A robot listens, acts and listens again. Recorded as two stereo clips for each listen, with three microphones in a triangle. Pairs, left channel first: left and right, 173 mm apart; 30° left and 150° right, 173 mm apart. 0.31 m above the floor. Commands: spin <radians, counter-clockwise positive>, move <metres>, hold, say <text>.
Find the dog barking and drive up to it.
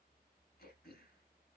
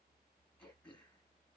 hold
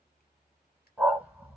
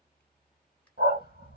spin -2.97
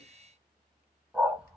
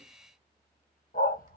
move 1.0
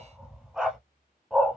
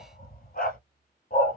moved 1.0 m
move 1.0
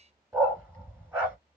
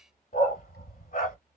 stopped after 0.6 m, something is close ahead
spin -0.17
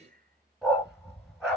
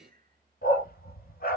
say Arrived at the dog barking, straight ahead.